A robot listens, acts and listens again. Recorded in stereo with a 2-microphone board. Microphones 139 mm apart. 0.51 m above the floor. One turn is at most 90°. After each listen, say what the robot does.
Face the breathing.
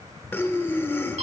Turn 15° left.
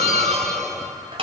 Keep listening.
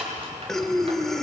Found it: breathing, straight ahead.